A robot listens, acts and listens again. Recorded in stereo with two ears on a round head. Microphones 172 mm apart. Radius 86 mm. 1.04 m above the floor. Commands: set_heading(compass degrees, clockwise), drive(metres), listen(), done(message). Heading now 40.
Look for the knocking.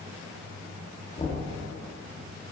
set_heading(10)
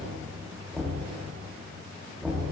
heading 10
done("Facing the knocking, under 1 m away.")